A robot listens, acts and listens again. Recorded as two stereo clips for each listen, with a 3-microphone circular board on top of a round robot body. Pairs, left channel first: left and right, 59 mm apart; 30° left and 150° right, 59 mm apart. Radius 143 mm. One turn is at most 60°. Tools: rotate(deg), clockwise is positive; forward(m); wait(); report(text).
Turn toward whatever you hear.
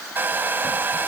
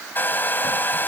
rotate(30)
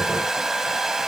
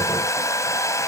report("Facing the hair dryer.")